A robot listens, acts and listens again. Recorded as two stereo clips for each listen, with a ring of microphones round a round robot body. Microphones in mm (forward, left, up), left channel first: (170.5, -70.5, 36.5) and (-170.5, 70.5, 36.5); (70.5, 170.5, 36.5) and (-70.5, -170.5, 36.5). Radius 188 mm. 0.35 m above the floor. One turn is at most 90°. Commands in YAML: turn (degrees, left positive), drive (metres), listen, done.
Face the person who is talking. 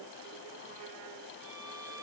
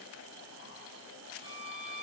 listen: true
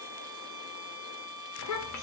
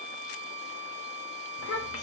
turn: 15
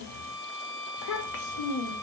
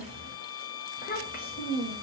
done: "Found it: a child speaking, straight ahead, under 1 m away."